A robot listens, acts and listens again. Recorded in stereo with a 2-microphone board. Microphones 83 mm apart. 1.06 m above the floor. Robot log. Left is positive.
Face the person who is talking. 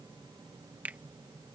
cmd idle
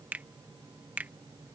cmd idle
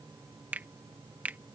end: I can't make out anyone speaking to turn to.